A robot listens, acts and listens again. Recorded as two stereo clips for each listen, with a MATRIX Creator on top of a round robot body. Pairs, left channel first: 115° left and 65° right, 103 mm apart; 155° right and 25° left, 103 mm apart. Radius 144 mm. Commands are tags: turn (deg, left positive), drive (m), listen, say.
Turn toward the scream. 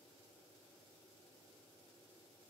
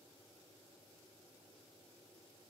<listen/>
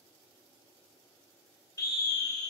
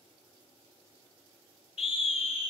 <turn deg="170"/>
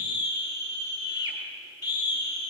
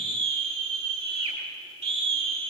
<turn deg="55"/>
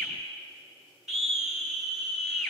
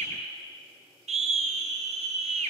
<turn deg="20"/>
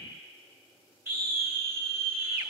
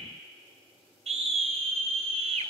<say>Facing the scream, 2 to 4 m away.</say>